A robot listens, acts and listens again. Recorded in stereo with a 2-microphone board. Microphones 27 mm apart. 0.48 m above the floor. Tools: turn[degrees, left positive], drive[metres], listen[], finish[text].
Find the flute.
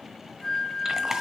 Thought: The flute: about 20° left or 160° left.
Action: turn[20]
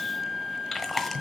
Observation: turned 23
Action: finish[Facing the flute, 2 to 4 m away.]